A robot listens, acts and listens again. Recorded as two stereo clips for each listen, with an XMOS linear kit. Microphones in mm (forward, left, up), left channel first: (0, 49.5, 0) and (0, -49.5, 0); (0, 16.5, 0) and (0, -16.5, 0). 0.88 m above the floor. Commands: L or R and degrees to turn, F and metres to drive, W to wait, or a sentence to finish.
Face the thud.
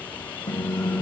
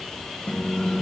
W
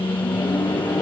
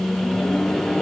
W
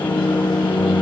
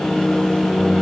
I can't make out a thud, only a microwave.